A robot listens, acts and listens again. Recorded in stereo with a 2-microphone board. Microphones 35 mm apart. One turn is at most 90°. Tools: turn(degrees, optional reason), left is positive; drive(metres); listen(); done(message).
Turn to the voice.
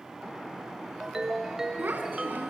turn(degrees=-70, reason="The child speaking: about 70° right or 110° right.")
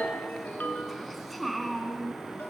done("Facing the child speaking.")